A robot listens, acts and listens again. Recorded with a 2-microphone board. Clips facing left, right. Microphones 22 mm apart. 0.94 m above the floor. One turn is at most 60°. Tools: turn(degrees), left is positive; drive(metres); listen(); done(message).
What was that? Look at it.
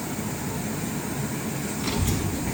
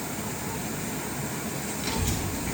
turn(degrees=-30)
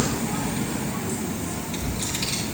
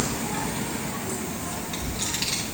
turn(degrees=-60)
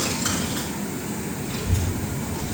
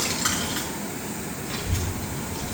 turn(degrees=-55)
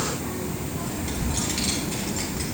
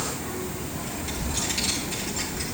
done("Facing the child speaking.")